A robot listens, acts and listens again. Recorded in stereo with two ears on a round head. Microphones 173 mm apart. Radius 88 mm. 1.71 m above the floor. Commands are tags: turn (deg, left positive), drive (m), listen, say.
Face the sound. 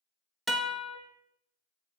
<turn deg="30"/>
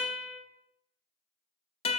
<turn deg="150"/>
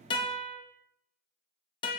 <turn deg="25"/>
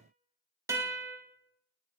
<turn deg="-15"/>
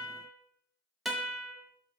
<say>Found it: a guitar, straight ahead, 1 to 2 m away.</say>